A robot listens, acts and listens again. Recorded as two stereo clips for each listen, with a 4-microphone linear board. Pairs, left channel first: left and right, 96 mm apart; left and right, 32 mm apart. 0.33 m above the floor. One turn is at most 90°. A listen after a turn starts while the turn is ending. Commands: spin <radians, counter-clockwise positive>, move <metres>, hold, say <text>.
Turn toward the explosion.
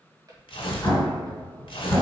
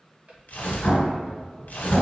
spin 0.52
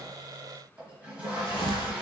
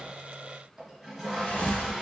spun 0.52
hold
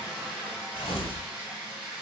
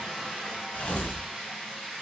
say I heard an explosion, but can't make it out now. It was about straight ahead or 120° left.